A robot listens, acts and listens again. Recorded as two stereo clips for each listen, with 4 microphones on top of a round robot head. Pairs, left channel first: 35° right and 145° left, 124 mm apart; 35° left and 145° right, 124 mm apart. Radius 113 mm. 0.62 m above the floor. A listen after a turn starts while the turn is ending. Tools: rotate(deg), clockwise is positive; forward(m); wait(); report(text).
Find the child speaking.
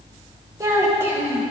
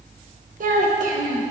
rotate(140)
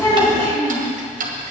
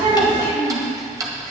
rotate(10)
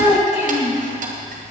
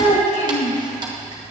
report("Facing the child speaking.")